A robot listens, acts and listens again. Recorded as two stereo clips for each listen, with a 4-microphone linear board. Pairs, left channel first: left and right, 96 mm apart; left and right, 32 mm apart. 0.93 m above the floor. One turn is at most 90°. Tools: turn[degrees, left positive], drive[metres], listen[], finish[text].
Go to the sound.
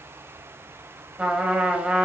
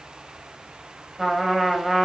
Action: turn[-30]
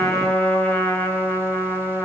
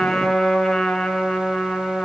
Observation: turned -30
Thought: So it is at 20° left.
Action: turn[20]
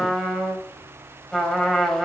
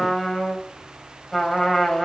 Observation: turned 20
Action: drive[1.0]
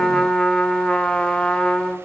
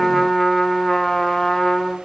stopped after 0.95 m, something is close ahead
Thought: The trumpet is now 10° left.
Action: turn[10]
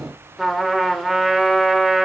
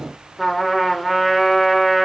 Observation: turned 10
Action: finish[I am next to the trumpet.]